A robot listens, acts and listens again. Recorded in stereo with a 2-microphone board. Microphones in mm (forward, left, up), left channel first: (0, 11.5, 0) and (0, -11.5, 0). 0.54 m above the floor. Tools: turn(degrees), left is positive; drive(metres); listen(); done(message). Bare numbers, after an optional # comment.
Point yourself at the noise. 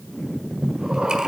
# The breathing: about 35° right or 145° right.
turn(-35)
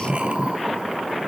# So it is at 105° right.
turn(-105)
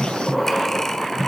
# The breathing is now 25° left.
turn(25)
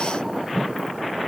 listen()
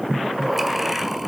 # The breathing is now 10° right.
turn(-10)
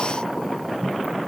done("Facing the breathing.")